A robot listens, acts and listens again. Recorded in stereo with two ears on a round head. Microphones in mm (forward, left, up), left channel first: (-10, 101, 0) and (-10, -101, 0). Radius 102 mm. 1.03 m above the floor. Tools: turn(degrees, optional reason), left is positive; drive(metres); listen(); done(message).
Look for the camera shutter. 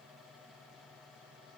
listen()
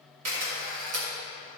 turn(degrees=-90)
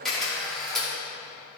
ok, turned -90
done("Facing the camera shutter, 2 to 4 m away.")